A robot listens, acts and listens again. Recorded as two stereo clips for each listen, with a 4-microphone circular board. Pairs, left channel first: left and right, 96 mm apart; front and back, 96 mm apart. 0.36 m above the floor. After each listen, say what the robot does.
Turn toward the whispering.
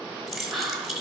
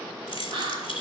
Turn 180° left.
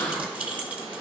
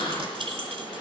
Keep listening.
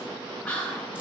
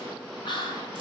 Turn 15° left.
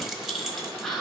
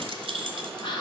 Facing the whispering.